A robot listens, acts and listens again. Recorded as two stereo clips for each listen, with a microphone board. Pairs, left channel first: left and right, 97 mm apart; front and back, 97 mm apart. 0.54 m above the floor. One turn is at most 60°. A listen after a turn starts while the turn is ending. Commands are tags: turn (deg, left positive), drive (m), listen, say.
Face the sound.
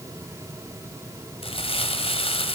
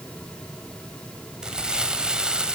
<turn deg="60"/>
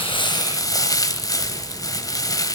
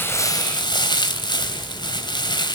<turn deg="40"/>
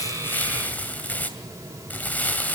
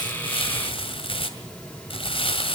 <turn deg="15"/>
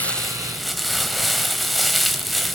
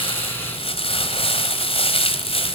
<say>Facing the crumpling.</say>